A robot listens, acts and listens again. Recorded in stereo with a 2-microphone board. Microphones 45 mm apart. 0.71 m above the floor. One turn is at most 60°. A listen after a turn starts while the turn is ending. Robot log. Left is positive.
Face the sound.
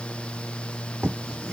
note: The writing: about 20° right or 160° right.
cmd yaw -20
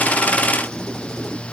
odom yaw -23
cmd idle
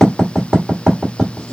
end: Facing the writing, 1 to 2 m away.